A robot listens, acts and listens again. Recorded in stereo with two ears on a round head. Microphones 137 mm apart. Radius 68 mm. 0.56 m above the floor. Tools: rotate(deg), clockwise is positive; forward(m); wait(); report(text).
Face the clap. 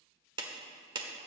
rotate(30)
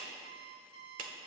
rotate(115)
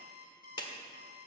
rotate(-35)
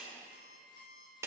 rotate(20)
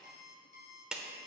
report("Facing the clap.")